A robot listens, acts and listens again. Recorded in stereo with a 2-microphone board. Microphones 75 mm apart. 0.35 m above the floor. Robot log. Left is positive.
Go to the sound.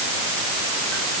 cmd idle
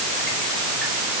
cmd idle
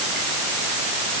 end: I can't make out anything.